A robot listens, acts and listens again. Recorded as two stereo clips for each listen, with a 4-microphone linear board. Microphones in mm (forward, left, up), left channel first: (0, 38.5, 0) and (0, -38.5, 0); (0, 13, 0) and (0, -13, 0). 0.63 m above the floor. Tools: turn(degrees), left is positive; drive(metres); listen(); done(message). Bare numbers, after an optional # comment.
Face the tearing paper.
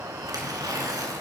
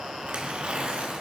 # The tearing paper: about 50° right or 130° right.
turn(-50)
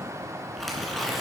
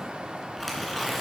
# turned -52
done("Facing the tearing paper, 2 to 4 m away.")